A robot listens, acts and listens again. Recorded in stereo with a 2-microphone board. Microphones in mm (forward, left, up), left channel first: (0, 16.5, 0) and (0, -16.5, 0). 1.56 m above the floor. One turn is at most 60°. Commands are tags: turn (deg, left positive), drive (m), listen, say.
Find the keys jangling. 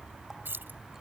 <turn deg="-60"/>
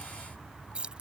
<turn deg="-30"/>
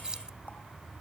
<turn deg="-20"/>
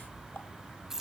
<turn deg="-10"/>
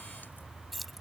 <say>Facing the keys jangling.</say>